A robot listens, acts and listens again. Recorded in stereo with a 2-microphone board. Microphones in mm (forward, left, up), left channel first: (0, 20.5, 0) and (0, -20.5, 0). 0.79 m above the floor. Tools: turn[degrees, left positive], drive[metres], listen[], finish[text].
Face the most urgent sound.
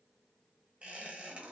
Action: listen[]
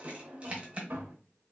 Action: listen[]
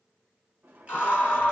Thought: The scream: about 50° left or 130° left.
Action: turn[50]
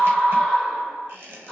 Thought: So it is at 10° left.
Action: turn[10]
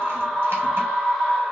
Action: finish[Found it: a scream, straight ahead.]